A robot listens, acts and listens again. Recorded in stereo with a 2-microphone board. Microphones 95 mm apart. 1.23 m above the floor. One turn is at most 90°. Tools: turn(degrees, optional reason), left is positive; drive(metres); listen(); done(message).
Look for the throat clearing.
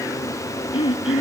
turn(degrees=75, reason="The throat clearing: about 75° left or 105° left.")
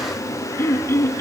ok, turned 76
turn(degrees=30, reason="So it is at 30° left.")
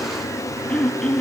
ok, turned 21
turn(degrees=10, reason="The throat clearing is now 10° left.")
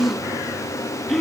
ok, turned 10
done("Facing the throat clearing, 2 to 4 m away.")